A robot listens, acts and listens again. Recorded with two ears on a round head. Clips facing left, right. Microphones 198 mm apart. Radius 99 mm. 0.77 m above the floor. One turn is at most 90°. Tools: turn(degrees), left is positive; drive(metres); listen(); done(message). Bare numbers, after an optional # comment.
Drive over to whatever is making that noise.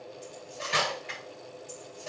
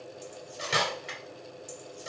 turn(-90)
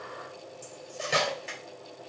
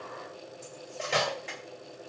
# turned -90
# So it is at 10° left.
turn(10)
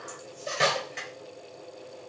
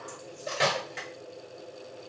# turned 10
drive(1.0)
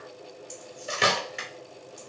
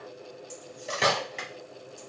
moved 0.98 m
drive(1.0)
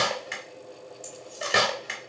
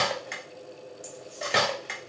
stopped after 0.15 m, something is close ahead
done("Arrived at the cutlery clinking, straight ahead.")